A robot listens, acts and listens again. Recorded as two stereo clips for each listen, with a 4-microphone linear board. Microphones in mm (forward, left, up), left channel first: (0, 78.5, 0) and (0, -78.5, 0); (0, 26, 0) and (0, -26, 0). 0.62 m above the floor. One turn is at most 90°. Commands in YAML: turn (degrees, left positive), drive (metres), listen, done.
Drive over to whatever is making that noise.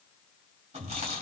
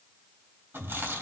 turn: -45
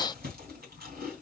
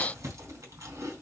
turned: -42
turn: -90
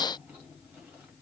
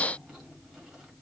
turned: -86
turn: -10
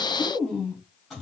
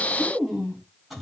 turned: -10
drive: 1.0
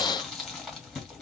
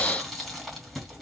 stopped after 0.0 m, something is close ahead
done: "Blocked. The chewing is further on, straight ahead."